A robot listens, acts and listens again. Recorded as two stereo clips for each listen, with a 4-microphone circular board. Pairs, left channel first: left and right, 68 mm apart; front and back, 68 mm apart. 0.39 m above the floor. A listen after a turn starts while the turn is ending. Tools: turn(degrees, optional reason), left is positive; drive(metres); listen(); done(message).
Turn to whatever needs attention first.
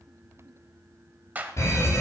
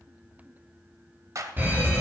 turn(degrees=125, reason="The fire alarm: 125° left.")
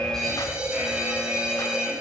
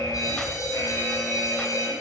turn(degrees=-15, reason="The fire alarm is now 15° right.")
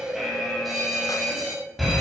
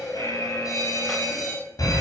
done("Facing the fire alarm, over 4 m away.")